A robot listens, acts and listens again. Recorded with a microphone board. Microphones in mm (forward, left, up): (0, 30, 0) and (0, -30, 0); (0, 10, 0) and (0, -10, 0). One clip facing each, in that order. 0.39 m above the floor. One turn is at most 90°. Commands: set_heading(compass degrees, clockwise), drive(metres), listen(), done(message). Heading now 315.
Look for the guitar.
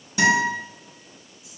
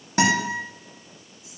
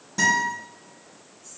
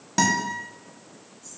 set_heading(10)
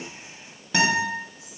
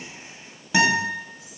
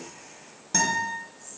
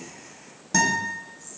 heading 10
done("Facing the guitar.")